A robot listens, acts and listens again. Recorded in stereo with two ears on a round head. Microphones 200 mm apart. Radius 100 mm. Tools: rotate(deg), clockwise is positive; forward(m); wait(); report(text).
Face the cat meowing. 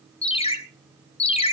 wait()
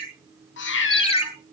rotate(-55)
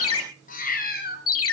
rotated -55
rotate(-45)
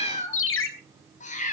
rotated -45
rotate(-35)
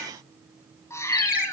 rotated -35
rotate(-10)
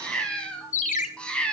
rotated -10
report("Facing the cat meowing.")